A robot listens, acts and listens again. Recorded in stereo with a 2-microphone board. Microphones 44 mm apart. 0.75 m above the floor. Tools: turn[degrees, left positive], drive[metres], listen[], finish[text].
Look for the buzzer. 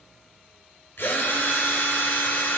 Action: listen[]
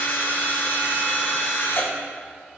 Action: listen[]
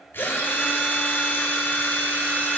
Action: finish[I can't make out a buzzer to turn to.]